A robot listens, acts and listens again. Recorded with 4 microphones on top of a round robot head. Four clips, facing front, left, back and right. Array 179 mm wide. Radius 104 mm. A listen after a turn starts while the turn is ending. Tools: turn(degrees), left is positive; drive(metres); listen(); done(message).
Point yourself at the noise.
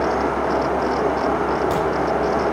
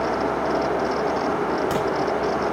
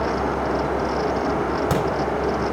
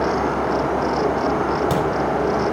turn(degrees=-155)
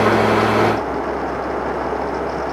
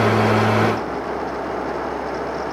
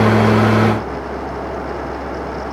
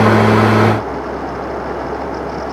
done("I heard a crack from this way, but can't make it out now.")